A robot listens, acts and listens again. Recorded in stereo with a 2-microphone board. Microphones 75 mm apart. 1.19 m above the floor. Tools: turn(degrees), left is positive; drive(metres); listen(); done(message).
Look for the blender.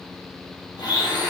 turn(degrees=60)
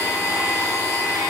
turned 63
turn(degrees=45)
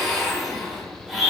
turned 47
done("Found it: a blender, straight ahead.")